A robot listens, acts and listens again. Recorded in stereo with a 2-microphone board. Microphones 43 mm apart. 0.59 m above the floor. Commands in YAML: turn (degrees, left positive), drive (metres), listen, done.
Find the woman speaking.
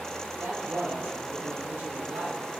turn: -75
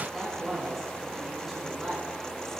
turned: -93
done: "Facing the woman speaking."